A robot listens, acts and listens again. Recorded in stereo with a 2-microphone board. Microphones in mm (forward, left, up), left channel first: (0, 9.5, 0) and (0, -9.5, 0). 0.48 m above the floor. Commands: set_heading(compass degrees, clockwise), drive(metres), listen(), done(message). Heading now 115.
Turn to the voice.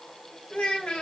set_heading(45)
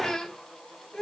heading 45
set_heading(10)
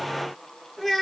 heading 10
done("Facing the child speaking.")